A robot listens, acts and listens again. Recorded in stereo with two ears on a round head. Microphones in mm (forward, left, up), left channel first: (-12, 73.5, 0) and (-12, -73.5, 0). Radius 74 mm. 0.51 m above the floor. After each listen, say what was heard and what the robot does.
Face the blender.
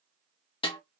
Keep listening.
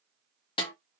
Keep listening.
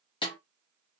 I can't make out a blender, only a snare drum.